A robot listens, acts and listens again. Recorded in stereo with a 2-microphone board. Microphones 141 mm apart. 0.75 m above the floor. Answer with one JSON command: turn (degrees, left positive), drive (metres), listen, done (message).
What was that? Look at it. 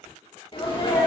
{"turn": 35}
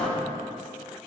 {"turn": 10}
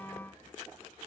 {"done": "Facing where the sneeze came from. I can't hear it now."}